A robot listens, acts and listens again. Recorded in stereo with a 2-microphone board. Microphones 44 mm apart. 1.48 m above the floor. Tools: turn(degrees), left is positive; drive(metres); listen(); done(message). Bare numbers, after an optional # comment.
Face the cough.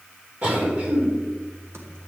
# The cough: about 40° right or 140° right.
turn(-40)
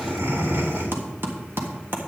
# So it is at 100° right.
turn(-100)
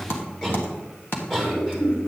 # The cough is now 15° left.
turn(15)
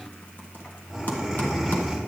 done("Found it: a cough, straight ahead.")